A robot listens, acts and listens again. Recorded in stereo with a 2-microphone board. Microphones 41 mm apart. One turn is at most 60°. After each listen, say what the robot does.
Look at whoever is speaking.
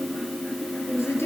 Turn 60° left.
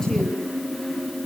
Keep listening.
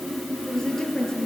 Turn 10° left.
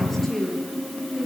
Facing the woman speaking.